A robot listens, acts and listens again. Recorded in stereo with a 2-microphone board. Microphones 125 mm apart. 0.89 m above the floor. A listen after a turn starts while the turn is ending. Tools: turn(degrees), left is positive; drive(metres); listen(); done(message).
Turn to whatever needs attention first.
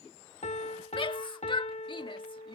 turn(degrees=45)
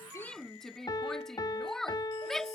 done("Found it: a shout, straight ahead.")